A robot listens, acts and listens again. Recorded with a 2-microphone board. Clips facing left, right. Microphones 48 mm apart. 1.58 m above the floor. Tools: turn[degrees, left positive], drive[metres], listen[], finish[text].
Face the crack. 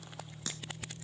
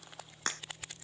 Thought: The crack: about 50° right or 130° right.
Action: turn[-50]
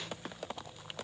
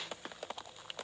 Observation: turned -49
Action: listen[]
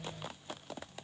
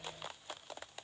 Action: finish[I heard a crack, but can't make it out now. It was about straight ahead or 80° right.]